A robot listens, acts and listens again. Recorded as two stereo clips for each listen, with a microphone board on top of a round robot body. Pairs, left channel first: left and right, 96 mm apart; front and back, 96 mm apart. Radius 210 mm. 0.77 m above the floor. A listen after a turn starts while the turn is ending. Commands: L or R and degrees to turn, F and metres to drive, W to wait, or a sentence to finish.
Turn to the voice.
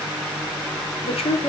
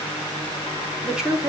L100
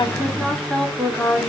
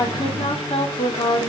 Found it: a woman speaking, straight ahead.